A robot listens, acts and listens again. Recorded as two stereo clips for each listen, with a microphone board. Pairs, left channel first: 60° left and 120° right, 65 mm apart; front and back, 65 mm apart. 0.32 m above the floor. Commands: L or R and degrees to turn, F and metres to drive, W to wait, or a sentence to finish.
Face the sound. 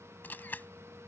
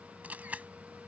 L115
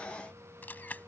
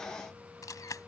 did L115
Facing the camera shutter.